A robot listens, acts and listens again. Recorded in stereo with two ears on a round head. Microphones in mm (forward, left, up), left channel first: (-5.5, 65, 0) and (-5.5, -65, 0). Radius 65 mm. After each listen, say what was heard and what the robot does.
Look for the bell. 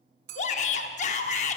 The bell: about 70° right or 110° right. Turn 70° right.
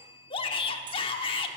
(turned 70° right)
So it is at 35° right. Turn 35° right.
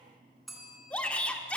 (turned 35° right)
Facing the bell, 2 to 4 m away.